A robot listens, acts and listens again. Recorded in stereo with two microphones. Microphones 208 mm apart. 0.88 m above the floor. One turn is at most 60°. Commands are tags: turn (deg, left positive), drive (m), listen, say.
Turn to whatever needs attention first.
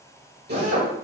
<listen/>
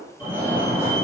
<turn deg="-30"/>
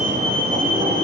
<turn deg="-60"/>
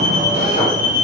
<turn deg="-60"/>
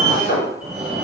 <turn deg="-10"/>
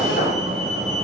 <say>Found it: a fire alarm, straight ahead, 2 to 4 m away.</say>